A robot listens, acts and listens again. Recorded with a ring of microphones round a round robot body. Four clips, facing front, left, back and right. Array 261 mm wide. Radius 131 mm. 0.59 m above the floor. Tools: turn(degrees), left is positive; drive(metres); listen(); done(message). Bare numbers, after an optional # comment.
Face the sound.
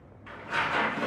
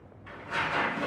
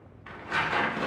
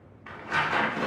# The tearing paper: 125° right.
turn(-125)
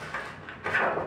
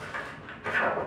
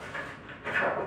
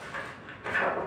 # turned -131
done("Found it: tearing paper, straight ahead.")